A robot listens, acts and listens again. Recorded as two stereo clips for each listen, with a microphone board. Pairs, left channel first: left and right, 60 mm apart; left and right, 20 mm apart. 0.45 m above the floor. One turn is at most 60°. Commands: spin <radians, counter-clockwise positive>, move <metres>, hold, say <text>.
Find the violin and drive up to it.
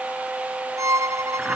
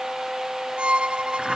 spin -1.05
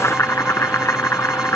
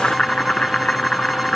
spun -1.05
hold
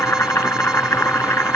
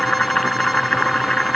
hold
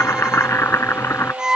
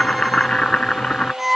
spin -0.17
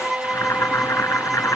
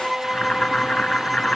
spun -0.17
move 1.0
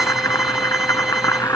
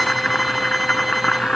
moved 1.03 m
hold
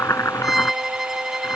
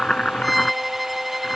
move 1.0
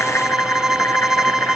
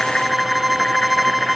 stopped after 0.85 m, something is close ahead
spin -0.17
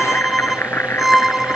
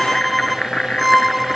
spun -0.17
say Arrived at the violin, straight ahead.